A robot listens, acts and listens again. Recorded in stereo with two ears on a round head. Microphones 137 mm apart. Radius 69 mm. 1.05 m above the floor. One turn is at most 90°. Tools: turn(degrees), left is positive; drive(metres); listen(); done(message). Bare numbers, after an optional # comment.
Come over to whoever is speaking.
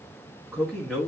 turn(30)
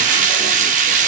listen()
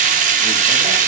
listen()
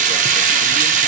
done("I heard a man speaking, but can't make it out now. It was about 30° right or 150° left. I did not reach it.")